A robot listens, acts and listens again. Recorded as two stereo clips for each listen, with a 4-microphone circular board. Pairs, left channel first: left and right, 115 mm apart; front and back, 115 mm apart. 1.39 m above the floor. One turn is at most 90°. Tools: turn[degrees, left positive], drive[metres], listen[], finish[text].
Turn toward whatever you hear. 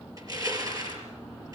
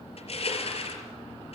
Thought: The crushing: 30° right.
Action: turn[-30]
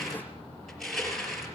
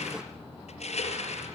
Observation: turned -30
Action: finish[Facing the crushing, over 4 m away.]